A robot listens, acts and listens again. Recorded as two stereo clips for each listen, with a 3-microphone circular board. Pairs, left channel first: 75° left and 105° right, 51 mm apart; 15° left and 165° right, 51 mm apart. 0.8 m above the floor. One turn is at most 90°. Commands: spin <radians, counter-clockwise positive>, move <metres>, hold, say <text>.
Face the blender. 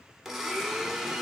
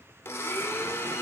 spin -0.44
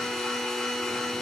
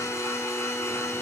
spin -0.17
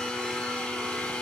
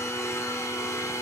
say Found it: a blender, straight ahead.